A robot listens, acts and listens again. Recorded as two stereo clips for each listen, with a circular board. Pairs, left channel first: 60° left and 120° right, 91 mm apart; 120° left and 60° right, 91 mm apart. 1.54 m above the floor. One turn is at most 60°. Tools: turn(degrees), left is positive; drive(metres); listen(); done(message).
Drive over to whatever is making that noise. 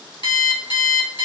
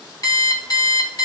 turn(degrees=60)
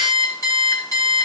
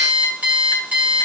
turn(degrees=15)
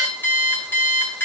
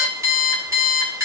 drive(metres=1.0)
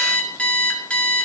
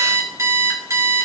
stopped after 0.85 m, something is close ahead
turn(degrees=-15)
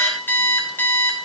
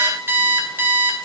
done("Arrived at the alarm clock, straight ahead.")